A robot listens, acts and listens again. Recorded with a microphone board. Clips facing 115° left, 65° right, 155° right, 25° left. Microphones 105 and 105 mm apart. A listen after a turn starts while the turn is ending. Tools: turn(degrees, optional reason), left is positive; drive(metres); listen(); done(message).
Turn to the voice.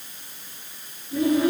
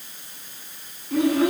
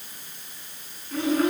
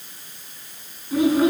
turn(degrees=-55, reason="The child speaking: 55° right.")
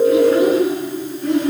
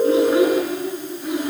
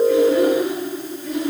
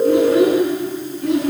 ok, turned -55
turn(degrees=15, reason="The child speaking is now 15° left.")
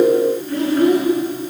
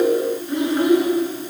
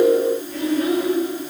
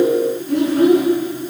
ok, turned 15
done("Facing the child speaking.")